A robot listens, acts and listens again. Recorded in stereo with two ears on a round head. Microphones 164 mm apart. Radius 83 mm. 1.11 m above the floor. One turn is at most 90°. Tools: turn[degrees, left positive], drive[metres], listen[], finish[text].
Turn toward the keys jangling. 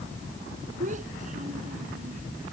Action: listen[]
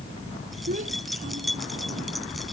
Action: turn[30]
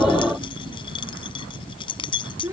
Thought: So it is at 150° left.
Action: turn[90]
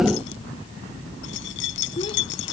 Thought: The keys jangling is now 105° left.
Action: turn[90]
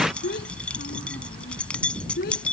Action: finish[Found it: keys jangling, straight ahead.]